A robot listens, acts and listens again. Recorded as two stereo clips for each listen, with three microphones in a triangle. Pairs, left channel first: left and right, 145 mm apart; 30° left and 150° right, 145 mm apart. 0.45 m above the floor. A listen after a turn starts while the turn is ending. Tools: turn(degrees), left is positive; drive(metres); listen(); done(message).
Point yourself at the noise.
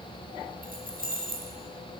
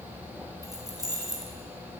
turn(degrees=-85)
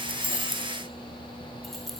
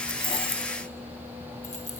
done("Facing the keys jangling, 1 to 2 m away.")